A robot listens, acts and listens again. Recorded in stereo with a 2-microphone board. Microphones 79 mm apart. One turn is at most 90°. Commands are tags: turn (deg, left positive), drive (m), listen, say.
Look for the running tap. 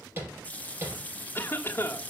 <turn deg="20"/>
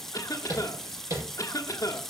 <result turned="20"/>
<say>Found it: a running tap, straight ahead.</say>